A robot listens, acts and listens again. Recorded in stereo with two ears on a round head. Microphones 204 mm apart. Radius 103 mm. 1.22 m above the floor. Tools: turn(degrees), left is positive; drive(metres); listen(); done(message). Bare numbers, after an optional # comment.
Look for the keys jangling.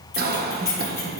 turn(30)
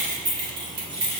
# So it is at 25° right.
turn(-25)
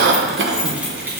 # The keys jangling is now 10° right.
turn(-10)
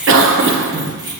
# The keys jangling is now 20° right.
turn(-20)
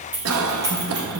# The keys jangling is now 15° right.
turn(-15)
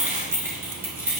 # The keys jangling is now 10° right.
turn(-10)
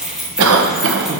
done("Facing the keys jangling, 1 to 2 m away.")